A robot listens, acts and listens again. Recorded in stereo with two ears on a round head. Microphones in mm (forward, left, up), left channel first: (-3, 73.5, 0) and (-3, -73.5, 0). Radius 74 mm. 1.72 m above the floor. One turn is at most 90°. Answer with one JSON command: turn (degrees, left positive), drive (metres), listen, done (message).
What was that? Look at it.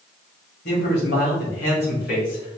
{"turn": 60}
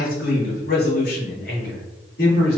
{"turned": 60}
{"turn": 70}
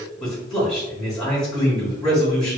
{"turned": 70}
{"done": "Found it: a man speaking, straight ahead, 2 to 4 m away."}